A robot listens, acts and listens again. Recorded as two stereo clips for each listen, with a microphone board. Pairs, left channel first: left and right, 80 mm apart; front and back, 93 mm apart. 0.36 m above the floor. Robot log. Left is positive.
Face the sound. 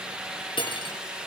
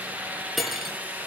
note: The cutlery clinking: 90° left.
cmd yaw +90
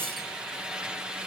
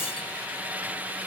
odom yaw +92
cmd idle
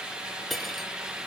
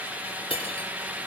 end: Found it: cutlery clinking, straight ahead, over 4 m away.